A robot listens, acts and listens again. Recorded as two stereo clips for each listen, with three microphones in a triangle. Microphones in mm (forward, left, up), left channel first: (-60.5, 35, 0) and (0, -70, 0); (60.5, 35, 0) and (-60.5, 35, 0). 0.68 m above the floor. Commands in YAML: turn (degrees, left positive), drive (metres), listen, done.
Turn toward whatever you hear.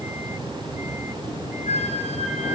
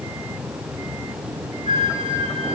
turn: 140
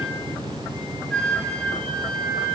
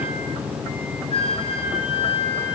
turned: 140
turn: 35
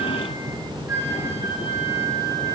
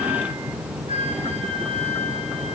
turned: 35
done: "Found it: a flute, straight ahead."